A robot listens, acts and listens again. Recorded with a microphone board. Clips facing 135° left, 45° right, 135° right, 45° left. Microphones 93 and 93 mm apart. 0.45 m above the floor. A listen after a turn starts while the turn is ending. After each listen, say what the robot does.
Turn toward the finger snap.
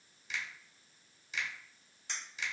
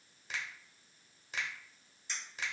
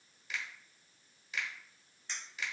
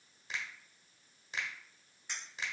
Turn 10° right.
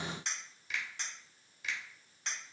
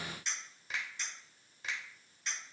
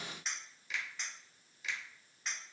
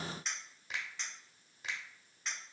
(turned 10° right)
Facing the finger snap, 1 to 2 m away.